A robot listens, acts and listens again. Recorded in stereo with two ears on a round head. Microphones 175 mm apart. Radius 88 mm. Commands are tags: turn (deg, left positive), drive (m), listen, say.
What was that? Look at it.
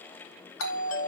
<turn deg="90"/>
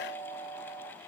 <turn deg="10"/>
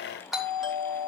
<say>Facing the doorbell, 2 to 4 m away.</say>